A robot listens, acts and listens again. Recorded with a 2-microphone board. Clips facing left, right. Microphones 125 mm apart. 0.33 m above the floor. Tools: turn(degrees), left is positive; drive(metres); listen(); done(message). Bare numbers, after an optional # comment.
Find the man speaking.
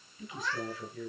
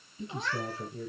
# The man speaking: about 30° right or 150° right.
turn(-30)
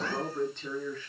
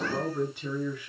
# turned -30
# So it is at 15° right.
turn(-15)
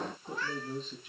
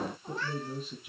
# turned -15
done("Facing the man speaking, over 4 m away.")